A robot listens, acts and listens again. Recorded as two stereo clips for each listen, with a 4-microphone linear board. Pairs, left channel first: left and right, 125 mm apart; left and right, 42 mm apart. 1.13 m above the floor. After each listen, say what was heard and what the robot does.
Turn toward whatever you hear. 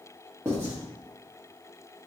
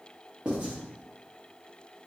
The writing: about 20° right or 160° right. Turn 20° right.
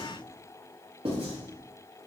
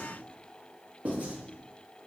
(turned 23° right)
So it is at 135° right. Turn 135° right.
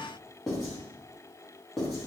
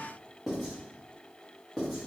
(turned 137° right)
Facing the writing.